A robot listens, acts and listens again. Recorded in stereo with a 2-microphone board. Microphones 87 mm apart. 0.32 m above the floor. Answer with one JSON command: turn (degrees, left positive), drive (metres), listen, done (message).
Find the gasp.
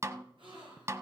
{"turn": -90}
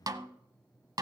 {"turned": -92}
{"done": "I heard a gasp from this way, but can't make it out now."}